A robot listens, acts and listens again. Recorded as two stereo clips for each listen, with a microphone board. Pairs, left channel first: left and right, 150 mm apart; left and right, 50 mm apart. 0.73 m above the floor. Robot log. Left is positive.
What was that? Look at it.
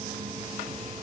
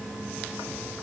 cmd idle
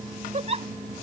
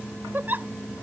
note: The giggle: about 45° right or 135° right.
cmd yaw -45
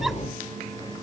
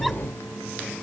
cmd idle
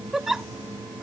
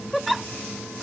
end: Found it: a giggle, straight ahead.